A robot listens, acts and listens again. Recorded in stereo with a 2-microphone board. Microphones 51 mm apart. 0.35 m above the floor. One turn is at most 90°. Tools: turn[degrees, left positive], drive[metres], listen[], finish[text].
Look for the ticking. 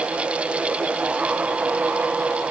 Action: listen[]
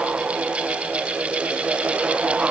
Action: listen[]
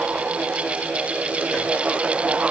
Action: finish[I can't make out ticking to turn to.]